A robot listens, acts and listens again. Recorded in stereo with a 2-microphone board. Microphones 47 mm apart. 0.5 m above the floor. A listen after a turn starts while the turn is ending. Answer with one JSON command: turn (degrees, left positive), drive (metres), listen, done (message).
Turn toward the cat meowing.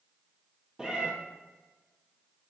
{"turn": -30}
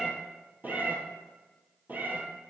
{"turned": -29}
{"turn": -135}
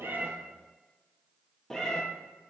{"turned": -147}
{"turn": 10}
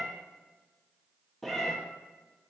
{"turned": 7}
{"done": "Facing the cat meowing."}